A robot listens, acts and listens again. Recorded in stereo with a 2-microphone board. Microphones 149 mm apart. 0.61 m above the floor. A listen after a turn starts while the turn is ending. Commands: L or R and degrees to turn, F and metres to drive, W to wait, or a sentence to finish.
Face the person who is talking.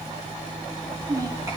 R25
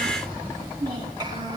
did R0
R30
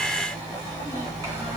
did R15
W
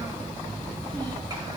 W
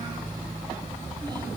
I heard a child speaking, but can't make it out now. It was about 15° right or 135° right.